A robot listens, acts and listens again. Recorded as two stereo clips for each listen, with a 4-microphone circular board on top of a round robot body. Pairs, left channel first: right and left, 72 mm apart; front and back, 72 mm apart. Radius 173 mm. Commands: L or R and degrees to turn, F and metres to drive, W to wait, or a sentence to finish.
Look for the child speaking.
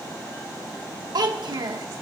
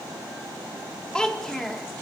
L85
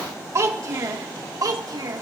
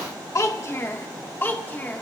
L65
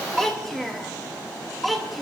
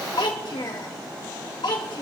Found it: a child speaking, straight ahead, 2 to 4 m away.